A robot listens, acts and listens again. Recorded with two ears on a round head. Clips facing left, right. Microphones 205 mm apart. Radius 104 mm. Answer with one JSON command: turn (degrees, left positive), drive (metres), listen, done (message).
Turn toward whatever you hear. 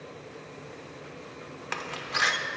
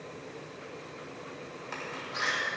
{"turn": 75}
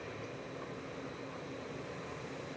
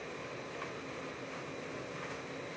{"listen": true}
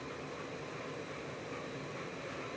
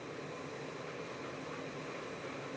{"done": "I heard a door slam, but can't make it out now. It was about straight ahead or 30° left."}